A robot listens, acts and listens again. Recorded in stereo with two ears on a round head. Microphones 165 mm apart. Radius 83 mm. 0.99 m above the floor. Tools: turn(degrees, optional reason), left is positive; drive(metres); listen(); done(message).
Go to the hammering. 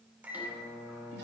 listen()
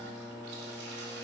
listen()
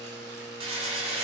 turn(degrees=-35, reason="The hammering: about 35° right or 145° right.")
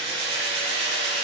turn(degrees=-115, reason="So it is at 115° right.")
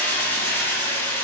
turn(degrees=10, reason="The hammering is now 10° left.")
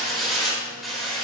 drive(metres=1.0)
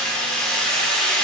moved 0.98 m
drive(metres=1.0)
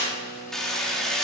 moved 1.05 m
drive(metres=1.0)
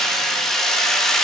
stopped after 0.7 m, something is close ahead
done("I am next to the hammering.")